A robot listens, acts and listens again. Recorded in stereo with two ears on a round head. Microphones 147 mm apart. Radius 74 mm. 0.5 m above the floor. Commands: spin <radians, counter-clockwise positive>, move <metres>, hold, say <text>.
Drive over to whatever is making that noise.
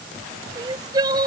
spin -0.44
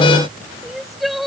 move 1.0
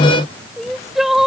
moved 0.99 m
move 1.0
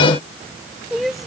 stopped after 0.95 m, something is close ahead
say Arrived at the crying, straight ahead.